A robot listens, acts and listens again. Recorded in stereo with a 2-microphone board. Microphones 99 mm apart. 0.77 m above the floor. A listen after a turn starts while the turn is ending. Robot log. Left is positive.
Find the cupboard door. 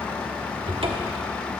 note: The cupboard door: about 65° right or 115° right.
cmd yaw -65
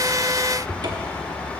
note: So it is at 50° right.
cmd yaw -50
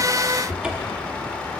note: The cupboard door is now 10° right.
cmd yaw -10
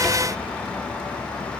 cmd idle
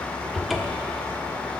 end: Facing the cupboard door.